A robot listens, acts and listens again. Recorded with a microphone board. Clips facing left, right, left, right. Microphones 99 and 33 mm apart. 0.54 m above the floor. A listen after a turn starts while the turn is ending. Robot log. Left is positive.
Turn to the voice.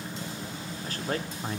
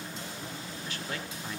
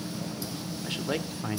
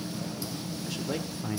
note: The man speaking: about 40° left or 140° left.
cmd yaw +40
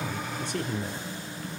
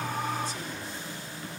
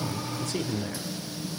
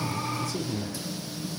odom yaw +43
note: So it is at 90° left.
cmd yaw +90
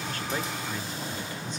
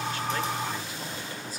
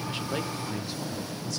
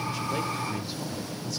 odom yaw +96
cmd idle
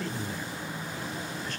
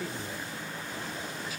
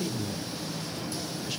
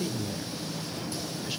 end: Facing the man speaking, 1 to 2 m away.